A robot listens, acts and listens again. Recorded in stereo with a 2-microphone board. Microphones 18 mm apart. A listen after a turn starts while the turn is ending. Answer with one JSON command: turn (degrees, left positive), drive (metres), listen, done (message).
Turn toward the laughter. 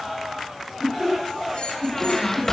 {"turn": -45}
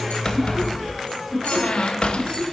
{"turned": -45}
{"listen": true}
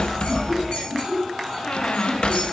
{"turn": 10}
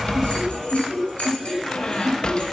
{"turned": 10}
{"done": "Found it: laughter, straight ahead, over 4 m away."}